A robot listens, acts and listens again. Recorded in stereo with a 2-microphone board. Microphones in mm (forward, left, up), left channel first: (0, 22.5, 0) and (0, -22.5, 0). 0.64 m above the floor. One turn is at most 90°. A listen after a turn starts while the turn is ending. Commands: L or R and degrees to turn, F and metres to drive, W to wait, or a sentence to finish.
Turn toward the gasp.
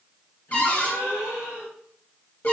L70
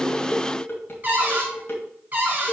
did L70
W
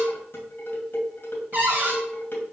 I heard a gasp, but can't make it out now. It was about straight ahead or 40° left.